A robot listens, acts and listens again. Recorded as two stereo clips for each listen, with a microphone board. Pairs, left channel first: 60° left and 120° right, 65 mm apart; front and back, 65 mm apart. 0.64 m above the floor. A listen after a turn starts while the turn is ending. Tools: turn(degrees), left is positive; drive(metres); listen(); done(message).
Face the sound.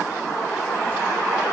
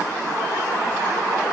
listen()
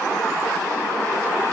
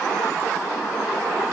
listen()
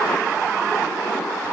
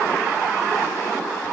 done("I can't make out anything to turn to.")